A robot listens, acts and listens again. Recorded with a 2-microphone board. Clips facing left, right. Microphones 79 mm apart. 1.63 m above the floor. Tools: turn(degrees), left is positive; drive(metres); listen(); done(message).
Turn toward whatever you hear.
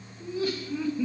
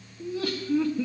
turn(degrees=-70)
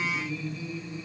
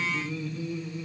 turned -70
turn(degrees=-50)
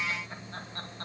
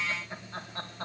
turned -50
turn(degrees=-10)
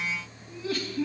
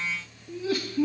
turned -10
turn(degrees=-10)
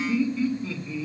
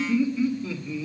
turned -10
turn(degrees=-10)
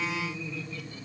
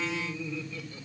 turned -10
done("Found it: laughter, straight ahead.")